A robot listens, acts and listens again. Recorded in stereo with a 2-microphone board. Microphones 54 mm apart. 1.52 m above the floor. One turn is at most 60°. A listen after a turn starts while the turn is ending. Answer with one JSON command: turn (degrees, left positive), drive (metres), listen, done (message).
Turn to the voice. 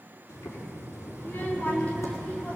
{"turn": 25}
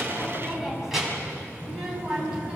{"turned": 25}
{"turn": -15}
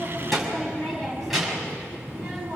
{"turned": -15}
{"turn": -10}
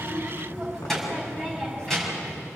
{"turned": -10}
{"done": "Found it: a child speaking, straight ahead."}